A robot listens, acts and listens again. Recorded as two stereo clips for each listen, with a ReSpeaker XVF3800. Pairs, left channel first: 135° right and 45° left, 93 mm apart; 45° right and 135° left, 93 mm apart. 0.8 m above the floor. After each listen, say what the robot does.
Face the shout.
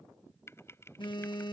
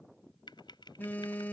Keep listening.
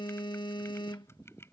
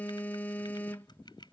Keep listening.
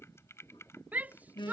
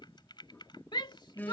Turn 25° right.
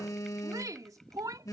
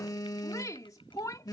Found it: a shout, straight ahead.